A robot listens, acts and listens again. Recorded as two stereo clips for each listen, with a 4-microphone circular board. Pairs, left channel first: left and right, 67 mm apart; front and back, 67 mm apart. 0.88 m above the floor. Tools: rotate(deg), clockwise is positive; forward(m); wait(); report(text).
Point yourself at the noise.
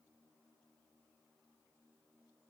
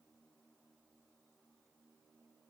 wait()
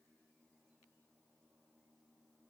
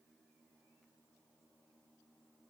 wait()
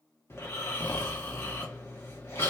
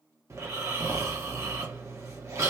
rotate(-140)
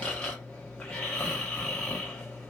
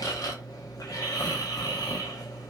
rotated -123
rotate(-15)
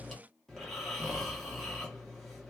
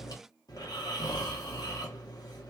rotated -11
report("Found it: snoring, straight ahead, 1 to 2 m away.")